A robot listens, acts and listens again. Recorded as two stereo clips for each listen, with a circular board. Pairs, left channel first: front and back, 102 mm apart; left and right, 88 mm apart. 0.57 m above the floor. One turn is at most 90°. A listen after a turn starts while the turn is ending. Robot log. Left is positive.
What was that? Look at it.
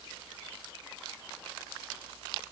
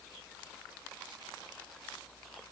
cmd idle
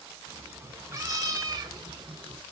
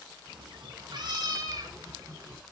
note: The cat meowing: 140° right.
cmd yaw -90
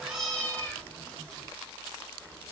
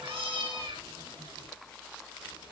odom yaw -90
note: The cat meowing is now 80° right.
cmd yaw -80
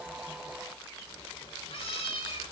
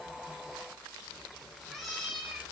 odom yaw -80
end: Facing the cat meowing.